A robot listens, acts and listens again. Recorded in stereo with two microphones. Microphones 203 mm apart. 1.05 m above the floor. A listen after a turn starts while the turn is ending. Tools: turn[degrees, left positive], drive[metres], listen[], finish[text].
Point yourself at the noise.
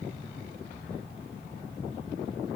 Action: listen[]
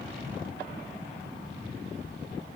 Action: listen[]
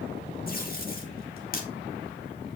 Thought: The tape being pulled: about 45° left or 135° left.
Action: turn[45]
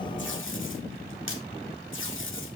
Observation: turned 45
Thought: So it is at 85° left.
Action: turn[85]
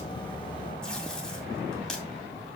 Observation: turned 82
Action: finish[Facing the tape being pulled, 2 to 4 m away.]